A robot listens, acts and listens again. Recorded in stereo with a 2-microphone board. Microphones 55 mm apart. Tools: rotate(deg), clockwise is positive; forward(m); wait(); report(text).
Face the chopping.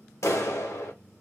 wait()
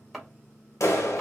rotate(-30)
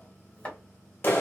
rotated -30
rotate(-150)
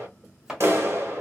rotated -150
rotate(10)
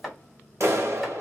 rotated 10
report("Facing the chopping, 1 to 2 m away.")